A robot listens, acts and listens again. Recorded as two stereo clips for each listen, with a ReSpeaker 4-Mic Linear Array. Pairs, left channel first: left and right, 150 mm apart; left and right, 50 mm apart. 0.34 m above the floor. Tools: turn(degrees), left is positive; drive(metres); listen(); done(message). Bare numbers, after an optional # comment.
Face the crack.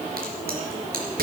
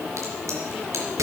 turn(-90)
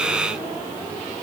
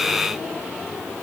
done("Facing where the crack came from. I can't hear it now.")